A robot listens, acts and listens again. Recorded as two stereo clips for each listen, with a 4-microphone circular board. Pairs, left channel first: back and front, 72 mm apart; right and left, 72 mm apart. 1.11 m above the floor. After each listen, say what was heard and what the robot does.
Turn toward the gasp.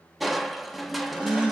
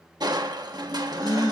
The gasp: 65° right. Turn 65° right.
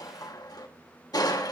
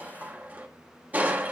I heard a gasp from this way, but can't make it out now.